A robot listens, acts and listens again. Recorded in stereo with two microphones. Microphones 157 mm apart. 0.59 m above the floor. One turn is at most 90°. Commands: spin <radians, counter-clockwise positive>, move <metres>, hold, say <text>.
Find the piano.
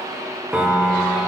spin -0.52
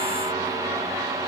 hold
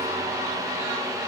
hold
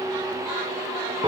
spin -1.57
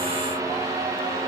spin -0.96
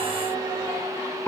spin 0.26
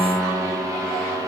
say Found it: a piano, straight ahead.